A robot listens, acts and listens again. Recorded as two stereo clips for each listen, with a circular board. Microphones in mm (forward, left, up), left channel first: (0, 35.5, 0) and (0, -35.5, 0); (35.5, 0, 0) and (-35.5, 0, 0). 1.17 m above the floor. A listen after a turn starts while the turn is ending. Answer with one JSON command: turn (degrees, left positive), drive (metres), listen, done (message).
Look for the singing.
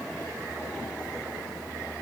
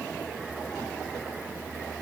{"listen": true}
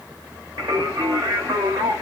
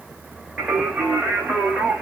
{"turn": -100}
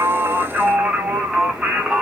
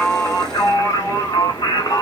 {"turn": -10}
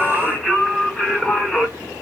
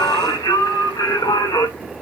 {"turn": 10}
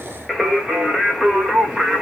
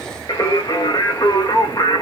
{"done": "Facing the singing."}